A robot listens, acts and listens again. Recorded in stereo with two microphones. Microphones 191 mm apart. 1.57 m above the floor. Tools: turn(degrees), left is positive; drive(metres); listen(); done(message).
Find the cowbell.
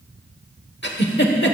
listen()
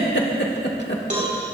turn(degrees=-40)
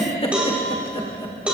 done("Facing the cowbell, 2 to 4 m away.")